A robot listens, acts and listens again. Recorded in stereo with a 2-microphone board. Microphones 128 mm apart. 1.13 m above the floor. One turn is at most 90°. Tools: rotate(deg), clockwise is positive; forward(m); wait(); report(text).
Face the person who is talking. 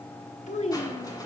rotate(-70)
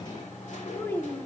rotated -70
rotate(-20)
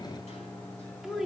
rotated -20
report("Found it: a child speaking, straight ahead.")